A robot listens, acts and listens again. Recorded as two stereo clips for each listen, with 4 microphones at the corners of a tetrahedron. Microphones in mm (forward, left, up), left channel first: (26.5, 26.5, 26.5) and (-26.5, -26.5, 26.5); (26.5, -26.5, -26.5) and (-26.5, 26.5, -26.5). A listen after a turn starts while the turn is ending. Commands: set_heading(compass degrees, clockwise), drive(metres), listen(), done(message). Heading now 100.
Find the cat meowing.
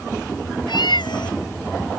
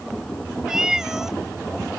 set_heading(50)
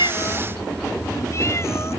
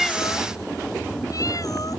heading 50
listen()
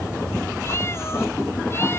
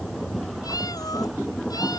listen()
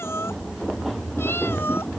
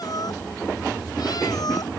done("I heard a cat meowing from this way, but can't make it out now.")